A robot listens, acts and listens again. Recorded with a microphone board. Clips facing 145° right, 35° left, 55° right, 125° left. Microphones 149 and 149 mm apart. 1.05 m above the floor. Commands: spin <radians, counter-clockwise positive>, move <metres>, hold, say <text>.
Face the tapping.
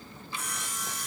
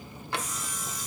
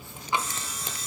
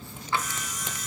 spin 0.26
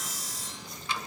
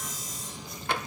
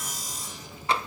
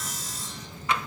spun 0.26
say Facing the tapping.